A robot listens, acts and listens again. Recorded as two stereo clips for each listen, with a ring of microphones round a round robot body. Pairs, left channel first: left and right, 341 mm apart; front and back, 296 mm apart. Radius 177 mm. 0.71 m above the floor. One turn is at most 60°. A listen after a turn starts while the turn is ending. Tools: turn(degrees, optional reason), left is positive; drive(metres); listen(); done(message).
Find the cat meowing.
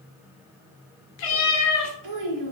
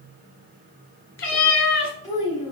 turn(degrees=50, reason="The cat meowing: 50° left.")
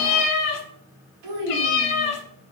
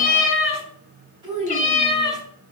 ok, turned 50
turn(degrees=60, reason="The cat meowing is now 75° left.")
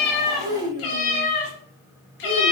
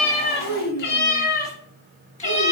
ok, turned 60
turn(degrees=60, reason="The cat meowing is now 70° left.")
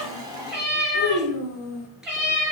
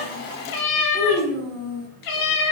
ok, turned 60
done("Found it: a cat meowing, straight ahead, 1 to 2 m away.")